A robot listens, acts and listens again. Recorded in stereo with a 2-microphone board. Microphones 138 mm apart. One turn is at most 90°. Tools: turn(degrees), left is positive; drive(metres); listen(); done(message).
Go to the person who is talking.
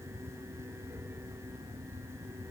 listen()
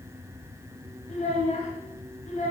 turn(degrees=65)
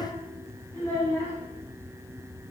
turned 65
turn(degrees=20)
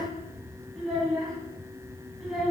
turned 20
drive(metres=1.0)
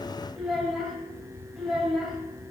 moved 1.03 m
drive(metres=1.0)
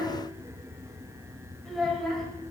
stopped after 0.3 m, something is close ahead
done("I am next to the child speaking.")